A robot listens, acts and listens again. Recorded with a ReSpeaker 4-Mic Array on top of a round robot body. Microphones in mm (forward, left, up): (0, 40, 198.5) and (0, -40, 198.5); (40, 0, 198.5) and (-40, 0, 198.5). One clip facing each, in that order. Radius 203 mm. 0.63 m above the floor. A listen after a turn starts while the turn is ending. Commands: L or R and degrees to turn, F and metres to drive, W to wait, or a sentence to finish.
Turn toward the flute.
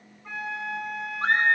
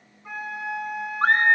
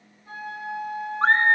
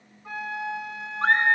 R175
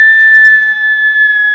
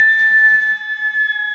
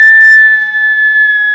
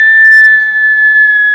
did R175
W
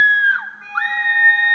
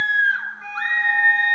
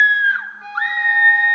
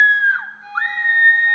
Facing the flute.